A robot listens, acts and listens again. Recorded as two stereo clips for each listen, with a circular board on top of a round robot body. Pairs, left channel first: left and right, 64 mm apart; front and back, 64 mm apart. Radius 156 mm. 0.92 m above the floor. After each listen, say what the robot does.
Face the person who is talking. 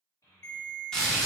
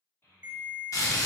Turn 50° left.
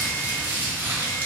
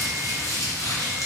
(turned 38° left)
Turn 15° left.
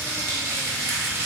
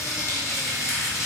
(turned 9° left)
Keep listening.
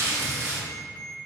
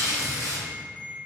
I heard a child speaking from this way, but can't make it out now.